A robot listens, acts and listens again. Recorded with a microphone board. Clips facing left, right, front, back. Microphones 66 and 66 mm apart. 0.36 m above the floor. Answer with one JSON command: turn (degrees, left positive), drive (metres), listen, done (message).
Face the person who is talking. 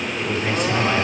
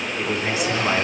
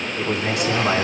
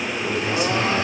{"turn": -10}
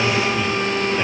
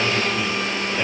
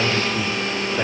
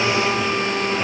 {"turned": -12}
{"listen": true}
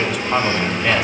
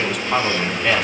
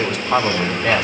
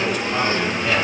{"done": "Facing the man speaking."}